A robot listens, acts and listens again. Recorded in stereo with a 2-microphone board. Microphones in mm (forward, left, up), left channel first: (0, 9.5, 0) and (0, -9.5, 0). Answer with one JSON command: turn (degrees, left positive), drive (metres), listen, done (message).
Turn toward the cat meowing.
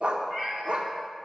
{"turn": -30}
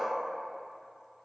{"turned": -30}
{"listen": true}
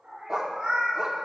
{"turn": -105}
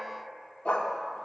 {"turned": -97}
{"listen": true}
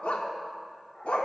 {"listen": true}
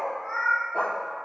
{"turn": 30}
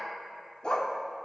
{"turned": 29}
{"listen": true}
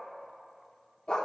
{"listen": true}
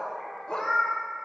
{"done": "Facing the cat meowing."}